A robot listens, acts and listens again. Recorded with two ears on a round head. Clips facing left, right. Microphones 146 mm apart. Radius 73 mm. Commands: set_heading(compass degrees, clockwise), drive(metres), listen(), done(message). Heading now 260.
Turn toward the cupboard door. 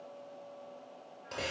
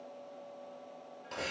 listen()
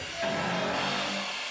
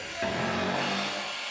set_heading(305)
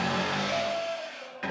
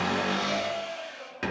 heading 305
set_heading(25)
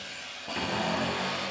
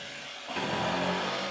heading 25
done("Facing the cupboard door.")